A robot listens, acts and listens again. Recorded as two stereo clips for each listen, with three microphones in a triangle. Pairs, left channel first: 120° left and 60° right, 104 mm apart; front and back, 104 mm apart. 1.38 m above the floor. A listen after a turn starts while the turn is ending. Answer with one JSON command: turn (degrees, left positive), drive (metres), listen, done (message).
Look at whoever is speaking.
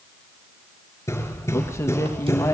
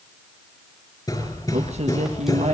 {"turn": -175}
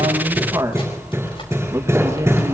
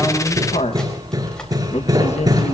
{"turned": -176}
{"done": "Found it: a man speaking, straight ahead, 1 to 2 m away."}